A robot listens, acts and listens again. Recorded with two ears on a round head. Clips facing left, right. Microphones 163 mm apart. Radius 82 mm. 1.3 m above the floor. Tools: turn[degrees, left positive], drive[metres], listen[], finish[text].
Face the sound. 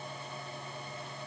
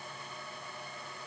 Action: listen[]
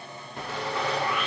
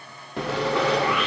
Thought: The sawing: about 55° right or 125° right.
Action: turn[-55]
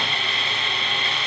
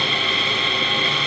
Thought: So it is at 70° right.
Action: turn[-70]
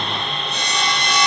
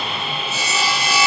Action: finish[Found it: sawing, straight ahead.]